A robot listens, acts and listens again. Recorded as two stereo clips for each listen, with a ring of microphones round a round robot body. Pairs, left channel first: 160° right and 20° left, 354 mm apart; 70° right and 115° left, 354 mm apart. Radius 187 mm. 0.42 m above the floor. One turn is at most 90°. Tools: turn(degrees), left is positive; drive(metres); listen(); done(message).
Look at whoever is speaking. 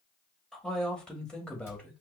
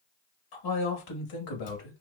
turn(degrees=-70)
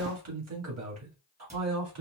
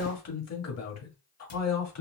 turn(degrees=-25)
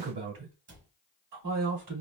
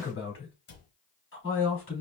turn(degrees=-10)
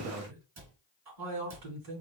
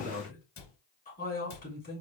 done("Facing the man speaking, 2 to 4 m away.")